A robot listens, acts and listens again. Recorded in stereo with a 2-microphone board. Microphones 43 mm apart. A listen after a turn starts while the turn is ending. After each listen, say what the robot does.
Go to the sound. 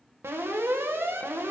Turn 75° right.
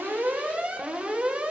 Turn 30° right.
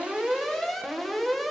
Drive 1.0 m forward.
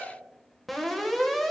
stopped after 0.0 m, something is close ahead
Blocked. The alarm is further on, straight ahead.